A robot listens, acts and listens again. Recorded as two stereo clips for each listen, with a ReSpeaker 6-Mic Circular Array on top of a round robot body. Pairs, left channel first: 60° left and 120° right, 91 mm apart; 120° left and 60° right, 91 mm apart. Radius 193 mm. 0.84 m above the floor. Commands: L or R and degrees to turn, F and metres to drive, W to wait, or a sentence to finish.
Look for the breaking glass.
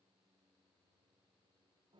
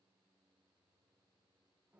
W
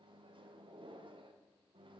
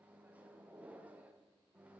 W
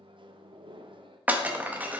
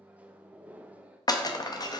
L165
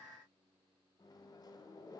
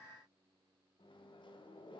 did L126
L40
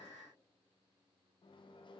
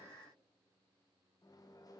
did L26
L15
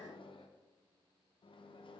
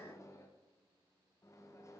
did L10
Facing where the breaking glass came from. I can't hear it now.